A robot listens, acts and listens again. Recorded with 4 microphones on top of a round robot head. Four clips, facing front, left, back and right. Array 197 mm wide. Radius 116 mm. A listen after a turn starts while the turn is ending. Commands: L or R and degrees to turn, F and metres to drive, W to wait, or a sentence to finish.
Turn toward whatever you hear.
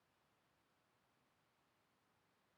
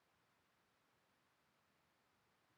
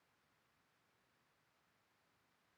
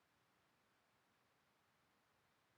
W
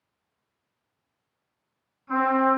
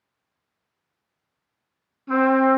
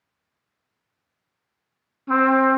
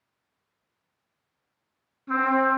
L170
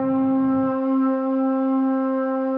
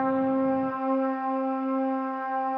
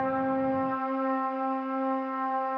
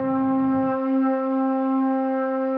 L20
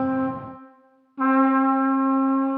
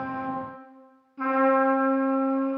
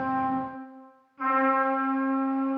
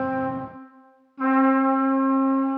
L10
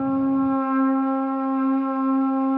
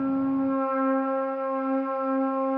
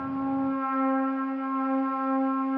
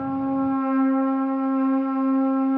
Found it: a trumpet, straight ahead, over 4 m away.